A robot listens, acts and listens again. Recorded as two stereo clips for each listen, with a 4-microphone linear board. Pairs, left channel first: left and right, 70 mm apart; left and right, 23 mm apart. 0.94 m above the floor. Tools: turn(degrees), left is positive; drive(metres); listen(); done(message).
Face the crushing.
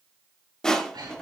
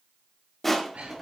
turn(degrees=30)
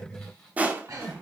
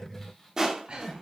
turn(degrees=-20)
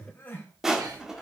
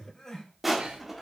done("Found it: crushing, straight ahead.")